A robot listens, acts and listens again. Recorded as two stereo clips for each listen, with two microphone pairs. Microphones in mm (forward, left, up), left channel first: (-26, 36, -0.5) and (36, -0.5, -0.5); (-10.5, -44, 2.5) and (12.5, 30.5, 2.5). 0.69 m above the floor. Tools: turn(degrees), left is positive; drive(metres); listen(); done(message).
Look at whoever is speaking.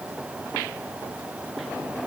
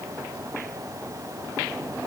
listen()
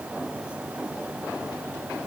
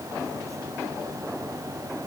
listen()
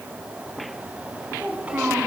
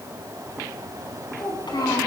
turn(degrees=-95)
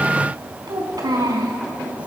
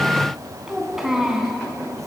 turn(degrees=-15)
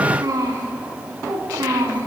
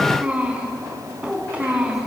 done("Facing the child speaking.")